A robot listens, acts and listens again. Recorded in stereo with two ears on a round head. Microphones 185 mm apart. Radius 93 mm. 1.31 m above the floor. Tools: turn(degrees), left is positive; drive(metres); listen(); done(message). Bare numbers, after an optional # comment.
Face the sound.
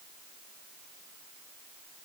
listen()
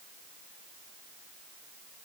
listen()
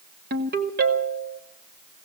# The ringtone: about 50° right or 130° right.
turn(-50)
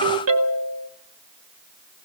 # So it is at 80° right.
turn(-80)
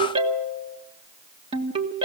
# The ringtone is now 30° right.
turn(-30)
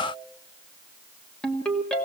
done("Found it: a ringtone, straight ahead, 1 to 2 m away.")